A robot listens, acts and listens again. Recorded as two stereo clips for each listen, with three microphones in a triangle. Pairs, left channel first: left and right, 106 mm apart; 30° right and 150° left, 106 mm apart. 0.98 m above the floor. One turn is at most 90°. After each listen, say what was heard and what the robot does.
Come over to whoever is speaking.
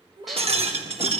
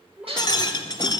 The child speaking: 130° right. Turn 90° right.
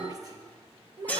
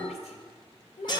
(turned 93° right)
The child speaking is now 35° right. Turn 35° right.
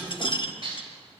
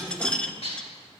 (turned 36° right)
Keep listening.
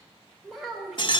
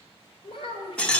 Drive 1.0 m forward.
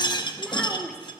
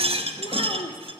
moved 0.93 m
Drive 1.0 m forward.
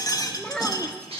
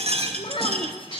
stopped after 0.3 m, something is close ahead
I am next to the child speaking.